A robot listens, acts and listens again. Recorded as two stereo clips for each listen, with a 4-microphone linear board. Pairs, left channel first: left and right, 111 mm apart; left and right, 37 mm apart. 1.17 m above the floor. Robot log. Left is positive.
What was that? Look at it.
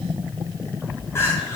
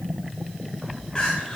note: The crying: about 25° left or 155° left.
cmd yaw +25
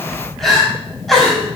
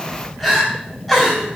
end: Facing the crying, over 4 m away.